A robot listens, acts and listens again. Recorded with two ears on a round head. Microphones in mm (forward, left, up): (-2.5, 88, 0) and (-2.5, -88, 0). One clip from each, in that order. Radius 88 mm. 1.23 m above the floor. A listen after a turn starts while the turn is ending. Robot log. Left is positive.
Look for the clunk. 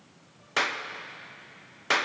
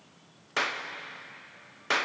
cmd idle
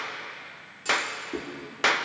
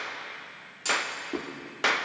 note: The clunk: about 40° right or 140° right.
cmd yaw -40
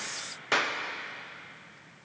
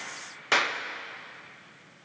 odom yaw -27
cmd idle
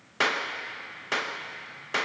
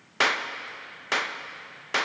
end: I heard a clunk, but can't make it out now. It was about 15° right or 110° right.